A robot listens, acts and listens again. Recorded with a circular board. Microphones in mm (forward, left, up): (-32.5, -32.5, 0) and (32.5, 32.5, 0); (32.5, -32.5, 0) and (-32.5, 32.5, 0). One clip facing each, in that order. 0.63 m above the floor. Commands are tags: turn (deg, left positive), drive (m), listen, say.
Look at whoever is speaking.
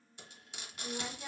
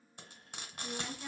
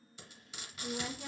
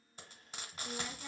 <turn deg="-60"/>
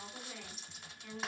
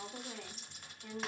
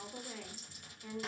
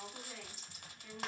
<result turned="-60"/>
<say>Found it: a woman speaking, straight ahead.</say>